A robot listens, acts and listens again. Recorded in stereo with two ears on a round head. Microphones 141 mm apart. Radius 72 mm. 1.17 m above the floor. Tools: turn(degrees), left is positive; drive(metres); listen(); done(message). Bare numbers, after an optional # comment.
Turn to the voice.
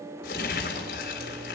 listen()
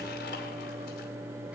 listen()
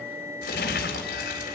done("I can't make out anyone speaking to turn to.")